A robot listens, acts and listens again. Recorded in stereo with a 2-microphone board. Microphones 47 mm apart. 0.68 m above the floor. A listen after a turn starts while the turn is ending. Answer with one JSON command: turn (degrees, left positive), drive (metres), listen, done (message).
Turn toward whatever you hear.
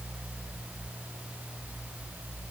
{"listen": true}
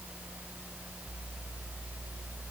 {"listen": true}
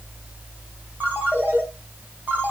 {"turn": -40}
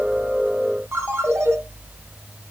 {"turn": -100}
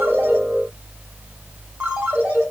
{"turn": -25}
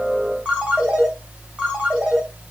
{"turn": -20}
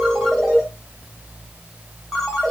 {"done": "Facing the ringtone."}